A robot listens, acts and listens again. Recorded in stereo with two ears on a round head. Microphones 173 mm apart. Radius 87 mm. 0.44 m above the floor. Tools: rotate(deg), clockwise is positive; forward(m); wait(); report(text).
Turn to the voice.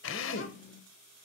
rotate(-60)
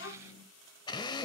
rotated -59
rotate(-65)
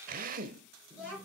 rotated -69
report("Facing the child speaking, over 4 m away.")